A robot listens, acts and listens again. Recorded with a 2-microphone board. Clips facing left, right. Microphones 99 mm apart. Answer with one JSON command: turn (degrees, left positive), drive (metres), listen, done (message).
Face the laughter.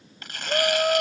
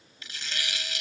{"turn": 75}
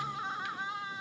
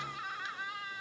{"turn": 25}
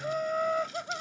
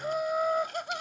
{"turn": -10}
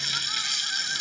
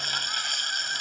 {"listen": true}
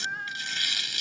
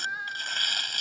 {"done": "Facing the laughter."}